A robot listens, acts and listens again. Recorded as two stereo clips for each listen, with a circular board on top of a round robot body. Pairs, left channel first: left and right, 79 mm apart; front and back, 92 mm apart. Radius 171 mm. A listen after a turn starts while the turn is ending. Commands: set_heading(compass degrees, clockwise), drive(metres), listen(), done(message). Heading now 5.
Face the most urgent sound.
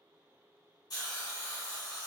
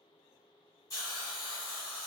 listen()
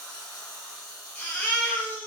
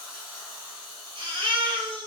set_heading(205)
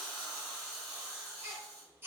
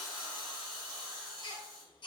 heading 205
set_heading(230)
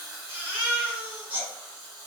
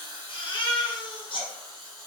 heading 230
set_heading(250)
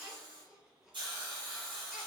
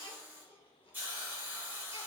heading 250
listen()
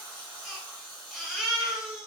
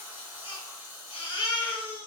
done("Found it: a baby crying, straight ahead.")